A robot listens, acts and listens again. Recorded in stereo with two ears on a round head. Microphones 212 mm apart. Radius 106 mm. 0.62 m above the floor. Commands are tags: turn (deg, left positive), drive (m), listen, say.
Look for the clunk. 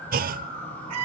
<turn deg="-40"/>
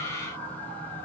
<listen/>
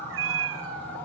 <say>I heard a clunk, but can't make it out now. It was about straight ahead or 100° right.</say>